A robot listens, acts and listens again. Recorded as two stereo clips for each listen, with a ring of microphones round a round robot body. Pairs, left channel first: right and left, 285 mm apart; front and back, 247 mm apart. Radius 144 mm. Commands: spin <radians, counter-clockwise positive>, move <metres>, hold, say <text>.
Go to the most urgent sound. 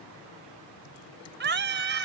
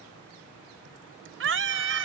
spin 2.53
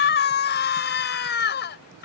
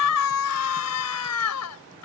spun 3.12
spin -0.61
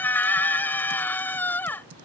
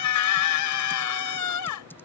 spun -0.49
move 1.0
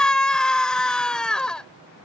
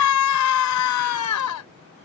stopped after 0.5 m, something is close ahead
say Something is in my way. I am facing the scream but have not reached it.